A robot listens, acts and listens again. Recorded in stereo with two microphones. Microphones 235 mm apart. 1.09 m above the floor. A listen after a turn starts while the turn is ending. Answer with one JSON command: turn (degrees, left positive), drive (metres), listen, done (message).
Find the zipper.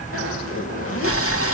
{"turn": 90}
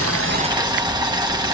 {"listen": true}
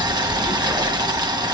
{"listen": true}
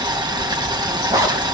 {"turn": -15}
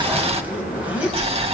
{"done": "Found it: a zipper, straight ahead."}